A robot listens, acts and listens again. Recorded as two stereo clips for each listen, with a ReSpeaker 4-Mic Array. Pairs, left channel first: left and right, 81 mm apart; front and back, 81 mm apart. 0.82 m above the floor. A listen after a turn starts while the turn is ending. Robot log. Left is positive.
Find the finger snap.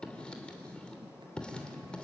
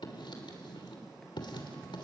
cmd idle
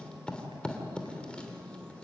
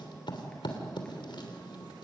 cmd idle
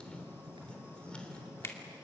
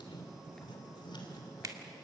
note: The finger snap: 145° left.
cmd yaw +145
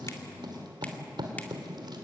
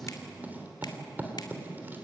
cmd idle
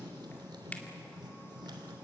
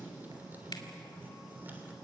cmd idle
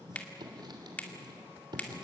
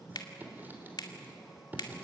note: The finger snap is now 20° left.
cmd yaw +20
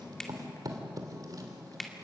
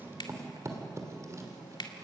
end: Found it: a finger snap, straight ahead.